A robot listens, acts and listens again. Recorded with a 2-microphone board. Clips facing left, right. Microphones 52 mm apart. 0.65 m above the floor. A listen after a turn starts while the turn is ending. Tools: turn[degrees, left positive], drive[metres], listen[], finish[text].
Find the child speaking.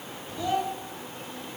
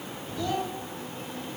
Thought: The child speaking: about 20° left or 160° left.
Action: turn[20]
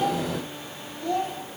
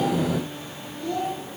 Thought: So it is at 130° left.
Action: turn[130]
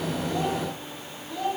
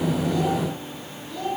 Thought: The child speaking is now 10° left.
Action: turn[10]
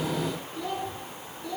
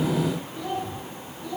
Action: finish[Found it: a child speaking, straight ahead, over 4 m away.]